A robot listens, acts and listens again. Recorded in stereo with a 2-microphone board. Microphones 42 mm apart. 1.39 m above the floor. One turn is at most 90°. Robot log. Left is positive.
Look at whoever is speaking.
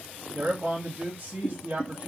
note: The man speaking: about 65° right or 115° right.
cmd yaw -65
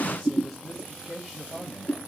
end: Facing the man speaking, 1 to 2 m away.